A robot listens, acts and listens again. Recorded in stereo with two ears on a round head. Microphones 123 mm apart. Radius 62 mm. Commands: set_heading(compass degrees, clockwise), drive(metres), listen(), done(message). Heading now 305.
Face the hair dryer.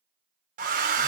set_heading(5)
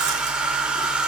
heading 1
done("Facing the hair dryer, under 1 m away.")